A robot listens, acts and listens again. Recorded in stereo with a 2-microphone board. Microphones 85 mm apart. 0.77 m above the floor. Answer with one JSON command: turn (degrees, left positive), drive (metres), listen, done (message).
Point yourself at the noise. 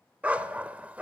{"turn": -15}
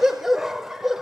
{"done": "Facing the dog barking."}